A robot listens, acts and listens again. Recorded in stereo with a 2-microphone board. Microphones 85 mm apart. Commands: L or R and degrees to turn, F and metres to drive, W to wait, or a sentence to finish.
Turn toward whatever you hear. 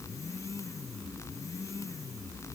W
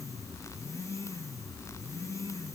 W
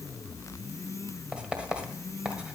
R30
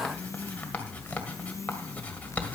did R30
L15
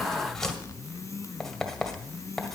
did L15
Facing the writing, 1 to 2 m away.